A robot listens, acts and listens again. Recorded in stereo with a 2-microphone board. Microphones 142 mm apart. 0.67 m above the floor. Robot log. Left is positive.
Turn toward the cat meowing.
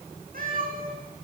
cmd yaw -90
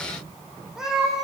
end: Found it: a cat meowing, straight ahead.